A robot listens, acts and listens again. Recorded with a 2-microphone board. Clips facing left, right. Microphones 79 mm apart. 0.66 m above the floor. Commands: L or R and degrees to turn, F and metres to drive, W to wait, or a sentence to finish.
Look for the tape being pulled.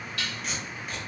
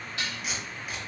R30
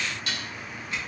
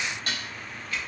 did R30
L25
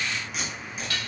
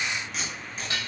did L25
Found it: tape being pulled, straight ahead, 1 to 2 m away.